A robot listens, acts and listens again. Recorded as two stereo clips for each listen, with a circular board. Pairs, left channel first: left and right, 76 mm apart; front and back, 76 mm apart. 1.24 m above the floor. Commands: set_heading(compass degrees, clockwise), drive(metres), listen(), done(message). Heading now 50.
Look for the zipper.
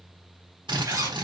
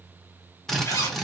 set_heading(100)
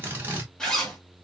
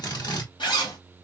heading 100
set_heading(90)
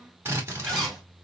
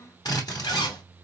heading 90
done("Facing the zipper, 2 to 4 m away.")